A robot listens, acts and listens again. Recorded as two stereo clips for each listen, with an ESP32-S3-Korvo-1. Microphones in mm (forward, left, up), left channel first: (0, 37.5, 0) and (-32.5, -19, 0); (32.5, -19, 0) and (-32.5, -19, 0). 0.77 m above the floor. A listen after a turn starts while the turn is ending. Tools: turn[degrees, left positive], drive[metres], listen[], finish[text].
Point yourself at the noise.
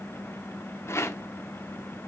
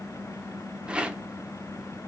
Thought: The rattle: 110° left.
Action: turn[110]
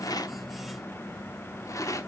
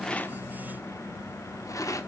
Thought: The rattle is now 30° left.
Action: turn[30]
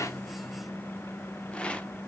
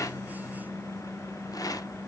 Thought: The rattle is now 10° right.
Action: turn[-10]
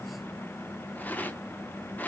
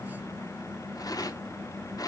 Action: finish[Found it: a rattle, straight ahead, under 1 m away.]